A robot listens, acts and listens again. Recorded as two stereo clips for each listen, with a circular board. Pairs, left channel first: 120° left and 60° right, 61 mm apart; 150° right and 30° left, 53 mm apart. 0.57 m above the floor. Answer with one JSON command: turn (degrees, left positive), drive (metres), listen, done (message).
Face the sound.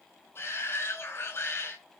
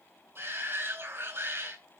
{"turn": 70}
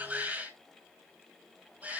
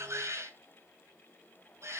{"done": "Facing the shout, over 4 m away."}